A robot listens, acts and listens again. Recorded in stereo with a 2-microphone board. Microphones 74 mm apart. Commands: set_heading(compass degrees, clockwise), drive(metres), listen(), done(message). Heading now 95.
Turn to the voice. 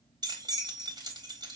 listen()
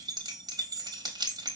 listen()
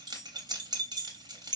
done("I can't make out anyone speaking to turn to.")